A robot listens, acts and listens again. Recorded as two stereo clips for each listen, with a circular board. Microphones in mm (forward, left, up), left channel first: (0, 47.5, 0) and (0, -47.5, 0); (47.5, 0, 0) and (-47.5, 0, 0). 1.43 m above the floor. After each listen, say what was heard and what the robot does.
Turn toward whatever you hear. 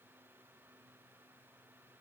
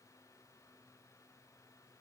Keep listening.
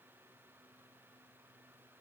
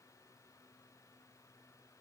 Keep listening.
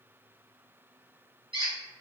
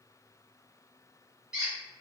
The squeak: 95° right. Turn 95° right.
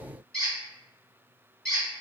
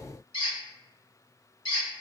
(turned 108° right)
The squeak is now 15° left. Turn 15° left.
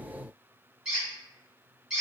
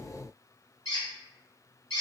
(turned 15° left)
Facing the squeak.